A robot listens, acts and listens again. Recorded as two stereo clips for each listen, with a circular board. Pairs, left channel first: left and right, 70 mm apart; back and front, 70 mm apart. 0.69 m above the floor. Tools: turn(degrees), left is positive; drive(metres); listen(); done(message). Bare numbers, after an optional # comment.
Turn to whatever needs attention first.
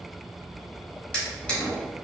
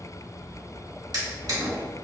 listen()
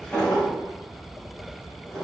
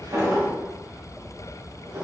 listen()
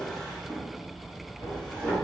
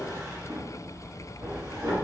done("I can't make out anything urgent, only a drawer.")